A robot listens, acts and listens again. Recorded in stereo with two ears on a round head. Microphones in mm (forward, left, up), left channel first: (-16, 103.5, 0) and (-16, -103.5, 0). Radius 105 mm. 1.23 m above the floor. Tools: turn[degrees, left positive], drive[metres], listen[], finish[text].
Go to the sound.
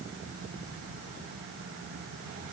Action: listen[]
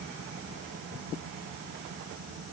Action: listen[]
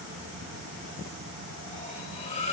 Thought: The cutlery clinking: about 30° left or 150° left.
Action: turn[30]
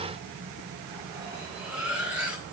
Action: drive[1.0]
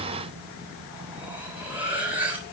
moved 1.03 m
Action: drive[1.0]
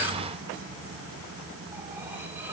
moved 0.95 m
Action: listen[]
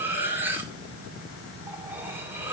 Thought: The cutlery clinking is now 10° right.
Action: turn[-10]
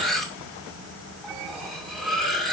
Action: drive[1.0]
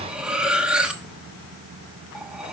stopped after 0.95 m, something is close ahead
Action: finish[Arrived at the cutlery clinking, straight ahead.]